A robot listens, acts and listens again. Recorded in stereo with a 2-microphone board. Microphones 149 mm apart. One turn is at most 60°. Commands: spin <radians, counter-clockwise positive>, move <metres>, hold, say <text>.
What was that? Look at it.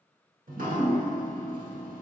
spin -1.05
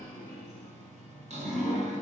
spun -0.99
spin -0.87
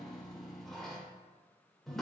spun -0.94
say Found it: dripping, straight ahead, under 1 m away.